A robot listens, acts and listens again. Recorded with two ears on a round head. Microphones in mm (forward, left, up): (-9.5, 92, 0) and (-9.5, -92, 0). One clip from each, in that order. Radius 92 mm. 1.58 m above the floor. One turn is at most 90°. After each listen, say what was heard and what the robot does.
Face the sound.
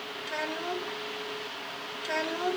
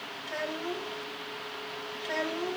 The child speaking: about 35° left or 145° left. Turn 35° left.
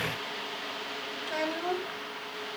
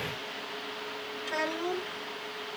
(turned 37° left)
Facing the child speaking, 2 to 4 m away.